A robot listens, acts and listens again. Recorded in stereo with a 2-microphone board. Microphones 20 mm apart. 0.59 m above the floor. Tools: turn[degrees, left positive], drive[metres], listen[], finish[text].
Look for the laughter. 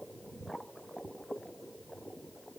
Action: listen[]
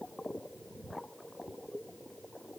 Action: listen[]
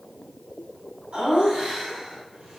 Thought: The laughter: about 75° right or 105° right.
Action: turn[-75]
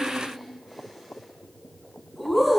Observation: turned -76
Action: finish[Found it: laughter, straight ahead.]